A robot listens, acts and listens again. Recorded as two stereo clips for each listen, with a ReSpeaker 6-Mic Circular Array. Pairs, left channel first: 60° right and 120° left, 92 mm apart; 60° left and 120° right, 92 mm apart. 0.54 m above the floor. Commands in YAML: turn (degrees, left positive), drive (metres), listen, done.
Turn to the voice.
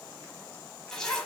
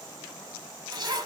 listen: true
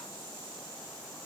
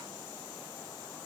listen: true
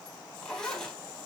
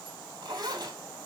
done: "I can't make out anyone speaking, only a zipper."